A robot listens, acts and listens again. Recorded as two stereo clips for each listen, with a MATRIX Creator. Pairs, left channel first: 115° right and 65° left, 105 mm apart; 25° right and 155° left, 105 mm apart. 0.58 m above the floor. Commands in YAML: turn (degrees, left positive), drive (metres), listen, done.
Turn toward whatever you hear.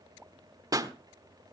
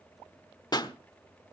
turn: 20
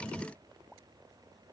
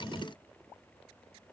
done: "I heard a pop from this way, but can't make it out now."